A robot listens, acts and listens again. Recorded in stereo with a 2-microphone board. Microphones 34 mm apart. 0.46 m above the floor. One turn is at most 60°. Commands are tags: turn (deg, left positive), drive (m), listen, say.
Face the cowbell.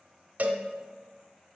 <turn deg="-50"/>
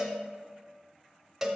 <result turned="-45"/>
<turn deg="-10"/>
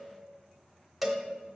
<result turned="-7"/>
<say>Found it: a cowbell, straight ahead, under 1 m away.</say>